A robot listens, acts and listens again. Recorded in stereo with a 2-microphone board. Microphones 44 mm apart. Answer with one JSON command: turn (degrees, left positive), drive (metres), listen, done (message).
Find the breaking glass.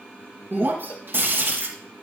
{"turn": -60}
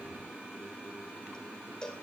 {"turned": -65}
{"listen": true}
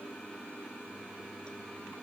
{"done": "I heard breaking glass, but can't make it out now. It was about 5° left or 55° right."}